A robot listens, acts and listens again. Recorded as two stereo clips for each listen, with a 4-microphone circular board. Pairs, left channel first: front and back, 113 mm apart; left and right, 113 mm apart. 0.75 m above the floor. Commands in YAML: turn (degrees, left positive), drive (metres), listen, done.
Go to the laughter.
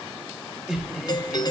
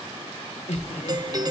turn: 95
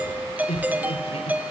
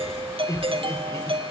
turn: 30
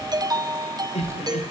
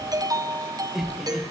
drive: 1.0
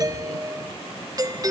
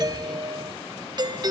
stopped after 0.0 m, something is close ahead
listen: true
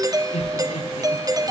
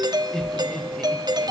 done: "Something is in my way. I am facing the laughter but have not reached it."